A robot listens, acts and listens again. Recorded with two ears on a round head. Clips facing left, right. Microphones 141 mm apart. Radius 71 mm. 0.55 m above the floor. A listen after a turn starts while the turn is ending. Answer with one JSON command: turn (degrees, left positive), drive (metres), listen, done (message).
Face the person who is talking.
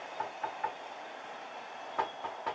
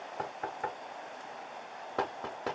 {"listen": true}
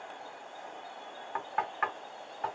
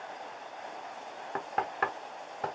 {"listen": true}
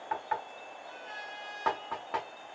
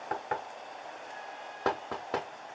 {"done": "I can't make out anyone speaking to turn to."}